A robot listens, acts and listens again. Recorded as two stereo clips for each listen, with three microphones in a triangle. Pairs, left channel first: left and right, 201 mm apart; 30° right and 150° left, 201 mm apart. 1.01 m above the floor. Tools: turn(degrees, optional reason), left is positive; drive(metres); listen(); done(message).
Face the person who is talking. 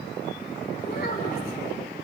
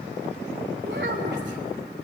turn(degrees=125, reason="The child speaking: 125° left.")
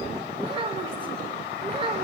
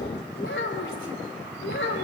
turn(degrees=-30, reason="The child speaking is now 30° right.")
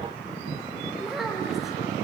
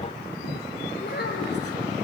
done("Found it: a child speaking, straight ahead.")